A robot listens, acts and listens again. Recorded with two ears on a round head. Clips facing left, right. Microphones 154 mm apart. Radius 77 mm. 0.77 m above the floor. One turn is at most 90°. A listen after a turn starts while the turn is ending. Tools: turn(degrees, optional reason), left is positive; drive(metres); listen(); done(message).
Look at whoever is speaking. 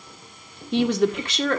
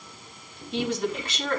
turn(degrees=60, reason="The woman speaking: about 60° left or 120° left.")
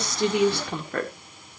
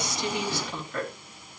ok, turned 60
turn(degrees=55, reason="So it is at 55° left.")
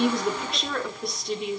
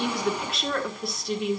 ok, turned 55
done("Found it: a woman speaking, straight ahead, 1 to 2 m away.")